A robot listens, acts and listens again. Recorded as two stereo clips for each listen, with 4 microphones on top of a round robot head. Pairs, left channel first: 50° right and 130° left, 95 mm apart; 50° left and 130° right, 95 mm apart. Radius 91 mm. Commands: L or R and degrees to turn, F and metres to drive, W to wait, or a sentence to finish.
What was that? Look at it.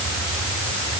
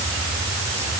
W
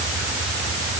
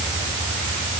W
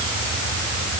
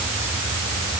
I can't make out anything to turn to.